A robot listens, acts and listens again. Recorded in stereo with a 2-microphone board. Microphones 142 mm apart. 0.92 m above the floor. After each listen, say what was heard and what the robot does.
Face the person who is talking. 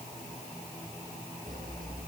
Keep listening.
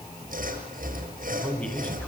Turn 30° left.
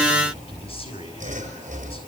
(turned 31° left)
So it is at 140° left. Turn 140° left.
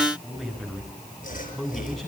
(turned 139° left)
Found it: a man speaking, straight ahead.